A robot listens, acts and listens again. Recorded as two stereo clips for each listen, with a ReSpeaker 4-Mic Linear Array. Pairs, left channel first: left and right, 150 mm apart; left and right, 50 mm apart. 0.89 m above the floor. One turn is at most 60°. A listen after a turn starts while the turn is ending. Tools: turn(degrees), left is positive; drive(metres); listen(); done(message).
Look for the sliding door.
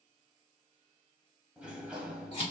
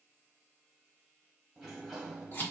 turn(degrees=-30)
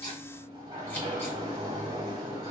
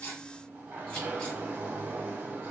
turn(degrees=-60)
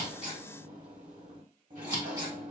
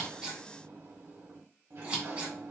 turn(degrees=-60)
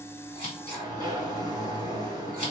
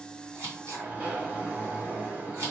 turn(degrees=-40)
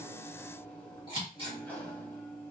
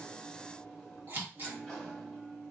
turn(degrees=10)
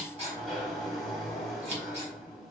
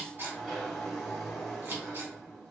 done("Facing the sliding door.")